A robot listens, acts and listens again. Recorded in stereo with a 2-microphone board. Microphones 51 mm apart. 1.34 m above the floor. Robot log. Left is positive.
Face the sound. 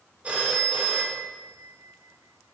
note: The phone ringing: about 25° right or 155° right.
cmd yaw -25
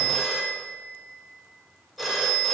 end: Facing the phone ringing, 1 to 2 m away.